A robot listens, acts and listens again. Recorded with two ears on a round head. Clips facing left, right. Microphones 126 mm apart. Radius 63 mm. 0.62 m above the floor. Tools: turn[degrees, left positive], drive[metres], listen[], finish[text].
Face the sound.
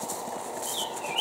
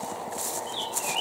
Thought: The bird: about 30° left or 150° left.
Action: turn[30]
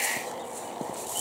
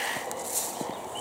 Action: listen[]
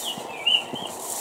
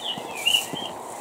Action: finish[Found it: a bird, straight ahead, 1 to 2 m away.]